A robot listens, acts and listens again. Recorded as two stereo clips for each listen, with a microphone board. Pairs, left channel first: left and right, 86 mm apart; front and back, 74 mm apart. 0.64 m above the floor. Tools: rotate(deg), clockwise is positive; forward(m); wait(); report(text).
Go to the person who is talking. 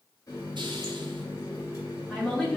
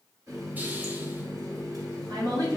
rotate(-175)
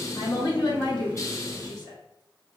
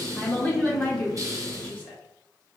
rotate(-65)
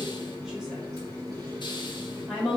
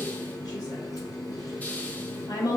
forward(1.0)
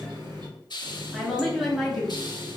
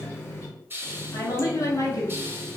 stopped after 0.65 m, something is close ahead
report("Arrived at the woman speaking, straight ahead.")